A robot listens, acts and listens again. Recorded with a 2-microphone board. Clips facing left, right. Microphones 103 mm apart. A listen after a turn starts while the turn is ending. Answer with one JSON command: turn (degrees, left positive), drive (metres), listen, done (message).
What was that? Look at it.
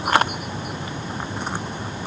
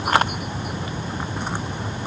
{"listen": true}
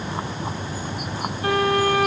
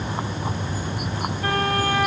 {"turn": -60}
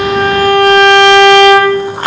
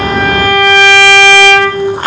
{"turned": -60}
{"done": "Found it: a violin, straight ahead, over 4 m away."}